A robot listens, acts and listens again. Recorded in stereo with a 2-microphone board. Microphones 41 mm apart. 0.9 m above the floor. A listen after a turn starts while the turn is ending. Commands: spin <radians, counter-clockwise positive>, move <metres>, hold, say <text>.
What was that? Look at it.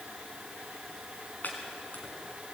spin 0.79
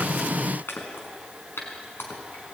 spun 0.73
spin 1.66
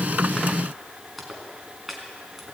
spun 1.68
say Facing the chopping, over 4 m away.